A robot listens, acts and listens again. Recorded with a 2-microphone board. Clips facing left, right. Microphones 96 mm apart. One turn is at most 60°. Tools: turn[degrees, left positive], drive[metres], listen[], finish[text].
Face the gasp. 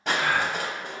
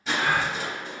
Thought: The gasp: about 30° right or 150° right.
Action: turn[-30]
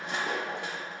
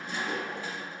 Action: listen[]
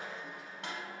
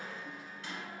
Action: finish[I heard a gasp, but can't make it out now. It was about straight ahead or 120° right.]